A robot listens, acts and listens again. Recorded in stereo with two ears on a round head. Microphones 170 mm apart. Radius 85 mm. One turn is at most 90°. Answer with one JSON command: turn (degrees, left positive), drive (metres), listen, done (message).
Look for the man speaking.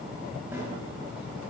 {"listen": true}
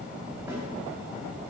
{"listen": true}
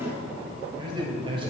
{"turn": -30}
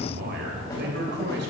{"turn": -90}
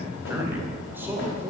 {"turn": -10}
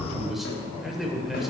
{"done": "Facing the man speaking, 2 to 4 m away."}